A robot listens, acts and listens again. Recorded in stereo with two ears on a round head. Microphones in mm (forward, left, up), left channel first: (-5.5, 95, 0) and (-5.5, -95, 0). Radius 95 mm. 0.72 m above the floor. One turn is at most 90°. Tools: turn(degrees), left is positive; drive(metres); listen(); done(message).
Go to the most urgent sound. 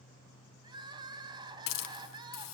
turn(degrees=-20)
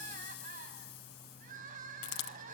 turn(degrees=-90)
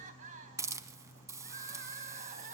turn(degrees=-35)
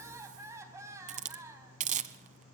turn(degrees=-15)
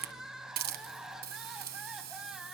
drive(metres=1.0)
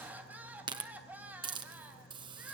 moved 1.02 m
drive(metres=1.0)
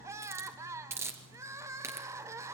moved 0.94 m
turn(degrees=-15)
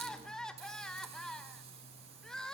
drive(metres=1.0)
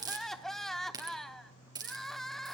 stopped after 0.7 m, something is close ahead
done("I am next to the crying.")